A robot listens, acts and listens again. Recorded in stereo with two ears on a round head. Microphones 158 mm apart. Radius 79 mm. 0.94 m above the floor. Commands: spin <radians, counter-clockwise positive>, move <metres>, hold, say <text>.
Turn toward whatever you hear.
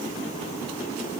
hold
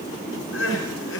spin 1.57
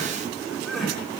say Facing the crying.